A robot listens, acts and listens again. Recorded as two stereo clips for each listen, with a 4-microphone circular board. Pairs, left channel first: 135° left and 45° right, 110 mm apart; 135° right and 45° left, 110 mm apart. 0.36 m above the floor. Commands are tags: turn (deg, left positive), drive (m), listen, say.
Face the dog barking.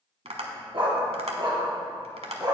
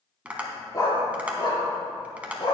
<turn deg="-95"/>
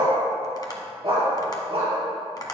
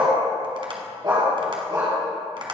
<turn deg="-10"/>
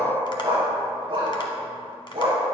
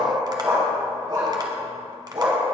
<say>Found it: a dog barking, straight ahead.</say>